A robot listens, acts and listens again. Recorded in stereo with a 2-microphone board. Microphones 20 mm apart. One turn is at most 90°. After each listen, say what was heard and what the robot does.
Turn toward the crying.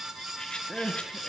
Turn 30° right.
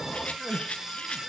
So it is at 25° left. Turn 25° left.
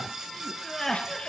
The crying is now 10° left. Turn 10° left.
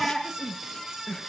Found it: crying, straight ahead, 2 to 4 m away.